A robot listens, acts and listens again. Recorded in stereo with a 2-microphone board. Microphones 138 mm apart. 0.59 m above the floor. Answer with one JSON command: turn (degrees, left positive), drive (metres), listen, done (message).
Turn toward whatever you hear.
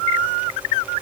{"listen": true}
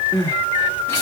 {"turn": 15}
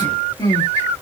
{"turn": 150}
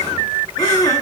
{"turn": 35}
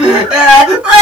{"done": "Found it: crying, straight ahead, 2 to 4 m away."}